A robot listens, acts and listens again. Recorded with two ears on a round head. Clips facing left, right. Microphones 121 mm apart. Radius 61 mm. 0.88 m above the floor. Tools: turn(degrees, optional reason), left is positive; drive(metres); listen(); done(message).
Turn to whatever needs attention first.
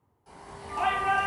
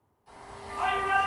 turn(degrees=65, reason="The shout: about 65° left or 115° left.")
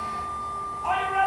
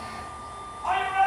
turn(degrees=15, reason="So it is at 15° left.")
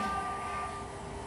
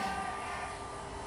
listen()
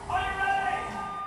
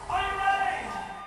done("Facing the shout.")